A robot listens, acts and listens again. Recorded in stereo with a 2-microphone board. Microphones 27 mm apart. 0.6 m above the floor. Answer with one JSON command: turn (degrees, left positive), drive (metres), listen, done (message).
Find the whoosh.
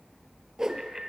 {"turn": -20}
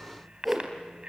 {"done": "Facing the whoosh, 2 to 4 m away."}